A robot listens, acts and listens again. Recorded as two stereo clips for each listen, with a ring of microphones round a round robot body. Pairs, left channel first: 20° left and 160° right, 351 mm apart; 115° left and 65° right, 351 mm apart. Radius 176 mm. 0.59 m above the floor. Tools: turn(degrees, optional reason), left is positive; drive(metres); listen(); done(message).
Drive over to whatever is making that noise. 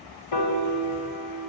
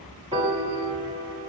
drive(metres=1.0)
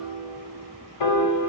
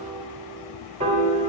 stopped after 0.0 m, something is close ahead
done("Something is in my way. I am facing the piano but have not reached it.")